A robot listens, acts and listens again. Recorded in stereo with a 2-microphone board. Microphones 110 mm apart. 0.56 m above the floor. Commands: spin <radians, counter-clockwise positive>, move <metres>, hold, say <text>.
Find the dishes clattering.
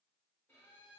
hold
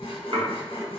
spin -0.87
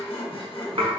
spin -1.22
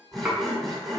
spin -0.17
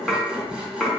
say Facing the dishes clattering.